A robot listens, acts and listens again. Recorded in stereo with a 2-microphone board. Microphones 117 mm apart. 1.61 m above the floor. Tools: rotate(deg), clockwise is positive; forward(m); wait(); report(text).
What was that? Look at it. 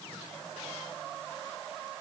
wait()
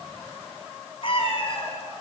rotate(-55)
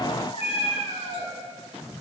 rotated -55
rotate(-60)
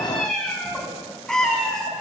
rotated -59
report("Facing the cat meowing.")